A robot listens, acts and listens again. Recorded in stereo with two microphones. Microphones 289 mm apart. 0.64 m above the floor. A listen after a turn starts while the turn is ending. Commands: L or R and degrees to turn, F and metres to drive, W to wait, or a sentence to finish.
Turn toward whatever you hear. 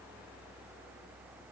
W
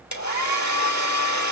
L70
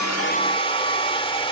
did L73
L20
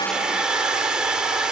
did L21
Found it: a hair dryer, straight ahead.